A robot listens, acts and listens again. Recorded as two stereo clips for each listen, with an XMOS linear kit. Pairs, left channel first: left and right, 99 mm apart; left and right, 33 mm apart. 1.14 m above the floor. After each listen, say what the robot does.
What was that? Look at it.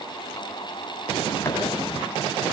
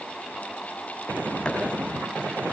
Keep listening.
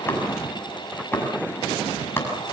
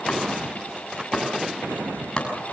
Turn 25° left.
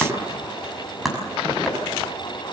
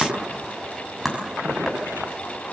Facing the chopping.